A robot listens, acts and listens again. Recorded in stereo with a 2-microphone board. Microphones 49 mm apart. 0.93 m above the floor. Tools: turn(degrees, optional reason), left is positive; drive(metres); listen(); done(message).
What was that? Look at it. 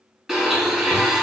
turn(degrees=-30)
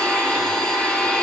turn(degrees=15, reason="So it is at 15° left.")
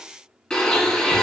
turn(degrees=10, reason="The blender is now 10° left.")
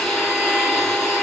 done("Facing the blender, 2 to 4 m away.")